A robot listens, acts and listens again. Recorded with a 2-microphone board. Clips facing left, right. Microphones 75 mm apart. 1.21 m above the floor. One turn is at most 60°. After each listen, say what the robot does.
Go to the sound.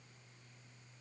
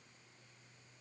Keep listening.
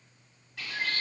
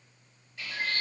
Turn 60° left.
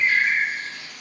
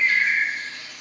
Turn 15° left.
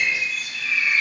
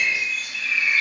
Drive 1.0 m forward.
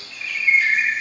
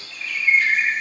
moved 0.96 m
Drive 1.0 m forward.
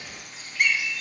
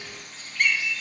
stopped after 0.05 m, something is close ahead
Turn 10° left.
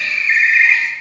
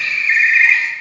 Arrived at the bird, straight ahead.